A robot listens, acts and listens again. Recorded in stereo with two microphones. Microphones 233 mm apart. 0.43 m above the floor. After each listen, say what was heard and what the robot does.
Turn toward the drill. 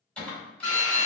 Turn 90° left.
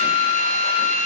So it is at 10° left. Turn 10° left.
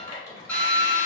Facing the drill, 1 to 2 m away.